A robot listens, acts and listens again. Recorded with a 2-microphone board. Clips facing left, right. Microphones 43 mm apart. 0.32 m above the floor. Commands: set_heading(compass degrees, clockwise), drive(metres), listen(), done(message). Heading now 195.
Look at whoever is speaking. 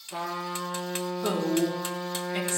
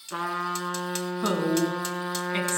set_heading(245)
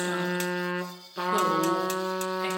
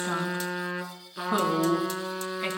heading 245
set_heading(315)
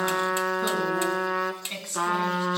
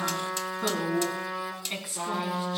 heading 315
done("Facing the woman speaking, 2 to 4 m away.")